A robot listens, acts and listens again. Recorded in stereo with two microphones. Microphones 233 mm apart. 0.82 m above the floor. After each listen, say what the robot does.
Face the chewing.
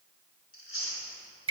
Turn 65° left.
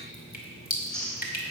Found it: chewing, straight ahead, 2 to 4 m away.